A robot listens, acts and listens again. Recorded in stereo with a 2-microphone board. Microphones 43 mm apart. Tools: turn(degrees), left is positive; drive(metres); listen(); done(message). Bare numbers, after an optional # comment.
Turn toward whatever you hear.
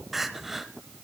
turn(-30)
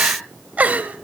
# So it is at 140° right.
turn(-140)
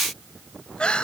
# The crying is now 25° left.
turn(25)
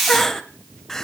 # The crying is now 10° left.
turn(10)
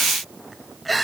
done("Facing the crying.")